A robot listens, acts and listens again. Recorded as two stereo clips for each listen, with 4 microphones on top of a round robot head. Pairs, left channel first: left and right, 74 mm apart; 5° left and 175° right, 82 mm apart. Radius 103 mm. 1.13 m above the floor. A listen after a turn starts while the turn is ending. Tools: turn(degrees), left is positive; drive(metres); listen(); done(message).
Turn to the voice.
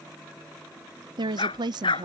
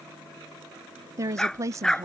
turn(degrees=-115)
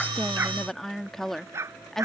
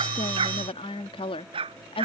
done("Found it: a woman speaking, straight ahead.")